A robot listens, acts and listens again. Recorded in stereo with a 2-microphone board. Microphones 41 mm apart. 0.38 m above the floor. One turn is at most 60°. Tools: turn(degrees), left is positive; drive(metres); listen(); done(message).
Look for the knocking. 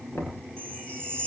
turn(degrees=60)
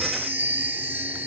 turn(degrees=30)
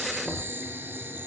turn(degrees=-10)
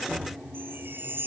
done("Found it: knocking, straight ahead.")